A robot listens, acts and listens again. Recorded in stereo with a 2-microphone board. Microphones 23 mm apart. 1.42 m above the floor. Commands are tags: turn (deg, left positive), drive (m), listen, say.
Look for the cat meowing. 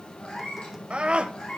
<turn deg="55"/>
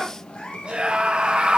<turn deg="60"/>
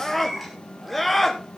<say>Facing the cat meowing, over 4 m away.</say>